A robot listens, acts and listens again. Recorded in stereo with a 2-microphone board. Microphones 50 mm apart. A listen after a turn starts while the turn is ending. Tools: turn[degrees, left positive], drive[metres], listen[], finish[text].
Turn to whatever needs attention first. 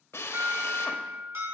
Thought: The alarm: about 75° right or 105° right.
Action: turn[-75]
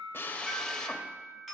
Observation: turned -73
Thought: So it is at 10° right.
Action: turn[-10]
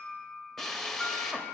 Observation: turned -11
Action: finish[Found it: an alarm, straight ahead.]